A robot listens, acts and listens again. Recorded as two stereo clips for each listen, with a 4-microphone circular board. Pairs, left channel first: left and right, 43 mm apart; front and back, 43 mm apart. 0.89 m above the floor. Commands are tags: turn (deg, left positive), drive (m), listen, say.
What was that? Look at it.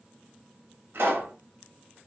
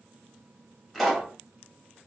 <turn deg="-85"/>
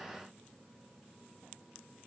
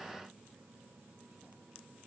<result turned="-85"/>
<say>Facing where the pop came from. I can't hear it now.</say>